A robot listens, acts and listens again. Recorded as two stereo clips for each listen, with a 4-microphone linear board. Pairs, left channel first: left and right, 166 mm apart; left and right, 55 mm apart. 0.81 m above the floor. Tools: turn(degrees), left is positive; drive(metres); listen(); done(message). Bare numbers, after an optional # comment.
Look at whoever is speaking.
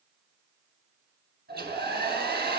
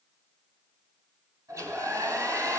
listen()
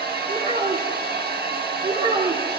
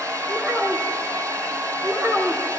# The child speaking: about 40° right or 140° right.
turn(-40)
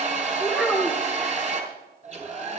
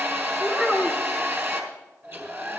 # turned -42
done("Found it: a child speaking, straight ahead.")